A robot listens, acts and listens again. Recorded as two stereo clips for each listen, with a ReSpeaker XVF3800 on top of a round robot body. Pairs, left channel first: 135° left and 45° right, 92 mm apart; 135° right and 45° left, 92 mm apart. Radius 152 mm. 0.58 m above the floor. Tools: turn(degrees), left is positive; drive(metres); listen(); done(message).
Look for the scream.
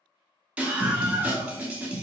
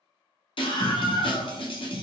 turn(degrees=-120)
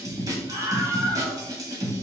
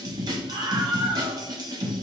done("Facing the scream.")